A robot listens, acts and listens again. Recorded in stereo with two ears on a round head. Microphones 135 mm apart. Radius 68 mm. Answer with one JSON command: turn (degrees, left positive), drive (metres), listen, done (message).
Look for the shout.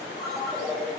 {"listen": true}
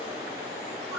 {"listen": true}
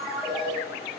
{"done": "I can't make out a shout, only a ringtone."}